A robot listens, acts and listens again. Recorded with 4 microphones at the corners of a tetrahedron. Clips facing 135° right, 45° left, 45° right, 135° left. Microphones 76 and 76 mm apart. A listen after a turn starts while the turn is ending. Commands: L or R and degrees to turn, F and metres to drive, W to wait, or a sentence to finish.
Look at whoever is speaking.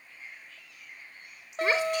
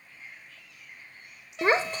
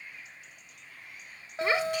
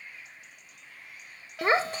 L90
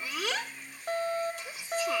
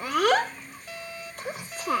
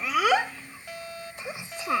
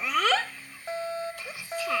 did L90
L20
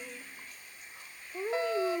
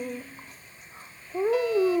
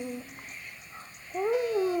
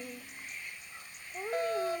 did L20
Facing the child speaking.